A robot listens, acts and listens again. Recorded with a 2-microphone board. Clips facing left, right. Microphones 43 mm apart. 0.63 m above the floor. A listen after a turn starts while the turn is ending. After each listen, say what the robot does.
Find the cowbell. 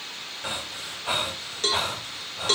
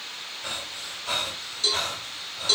Turn 55° left.
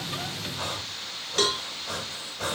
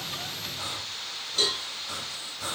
Turn 70° left.
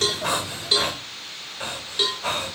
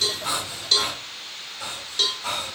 Turn 20° left.
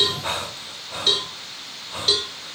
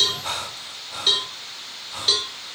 Facing the cowbell, 1 to 2 m away.